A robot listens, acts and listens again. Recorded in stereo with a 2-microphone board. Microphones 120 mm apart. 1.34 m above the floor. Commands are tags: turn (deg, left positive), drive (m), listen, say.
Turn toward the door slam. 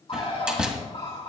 <turn deg="-30"/>
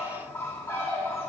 <listen/>
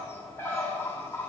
<say>I heard a door slam, but can't make it out now. It was about 25° left or 145° right.</say>